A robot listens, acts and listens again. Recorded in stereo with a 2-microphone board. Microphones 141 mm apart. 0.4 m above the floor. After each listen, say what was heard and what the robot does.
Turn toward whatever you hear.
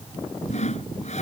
The sawing: about 55° left or 125° left. Turn 55° left.
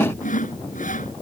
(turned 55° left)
So it is at 70° left. Turn 70° left.
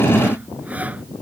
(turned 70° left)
Keep listening.
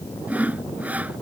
The sawing is now 10° right. Turn 10° right.
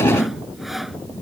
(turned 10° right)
Found it: sawing, straight ahead.